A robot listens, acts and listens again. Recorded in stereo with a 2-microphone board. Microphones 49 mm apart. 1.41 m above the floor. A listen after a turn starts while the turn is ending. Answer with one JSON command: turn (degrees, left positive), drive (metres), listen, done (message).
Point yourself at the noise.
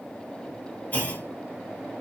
{"turn": 35}
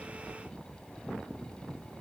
{"listen": true}
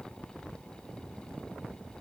{"done": "I heard a clunk, but can't make it out now. It was about straight ahead or 110° left."}